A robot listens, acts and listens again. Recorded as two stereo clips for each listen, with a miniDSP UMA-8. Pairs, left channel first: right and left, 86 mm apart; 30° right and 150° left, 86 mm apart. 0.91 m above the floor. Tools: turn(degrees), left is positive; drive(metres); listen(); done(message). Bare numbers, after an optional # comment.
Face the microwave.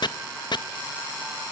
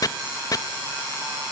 listen()
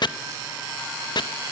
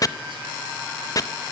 listen()
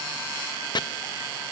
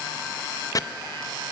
done("I can't make out a microwave, only chopping.")